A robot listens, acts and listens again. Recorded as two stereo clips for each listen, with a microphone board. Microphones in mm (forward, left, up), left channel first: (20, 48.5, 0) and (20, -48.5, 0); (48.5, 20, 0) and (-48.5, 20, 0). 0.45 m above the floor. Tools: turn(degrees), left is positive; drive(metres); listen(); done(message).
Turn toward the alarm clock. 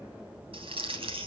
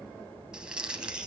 listen()
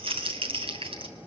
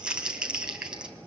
listen()
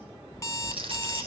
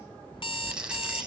turn(degrees=30)
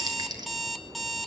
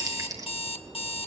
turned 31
done("Found it: an alarm clock, straight ahead, 1 to 2 m away.")